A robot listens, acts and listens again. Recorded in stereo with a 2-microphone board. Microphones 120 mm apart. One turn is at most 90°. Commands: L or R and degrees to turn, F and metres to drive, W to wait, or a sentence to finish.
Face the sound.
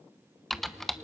L30
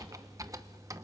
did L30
R25
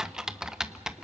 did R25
Facing the typing on a keyboard, under 1 m away.